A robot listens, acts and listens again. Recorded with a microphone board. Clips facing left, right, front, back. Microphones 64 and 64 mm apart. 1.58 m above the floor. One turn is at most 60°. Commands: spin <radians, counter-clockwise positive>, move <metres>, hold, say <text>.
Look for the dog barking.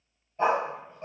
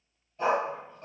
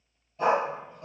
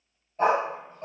spin 1.05
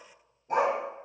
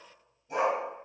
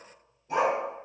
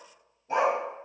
spin 1.05
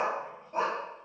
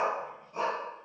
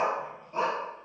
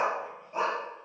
spin 1.05
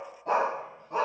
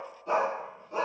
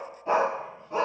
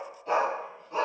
spin 1.05
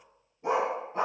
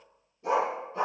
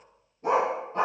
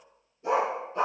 spin 0.61
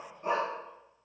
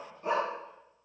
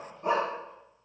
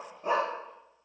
spin 0.26
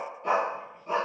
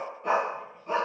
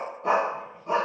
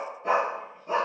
say Found it: a dog barking, straight ahead.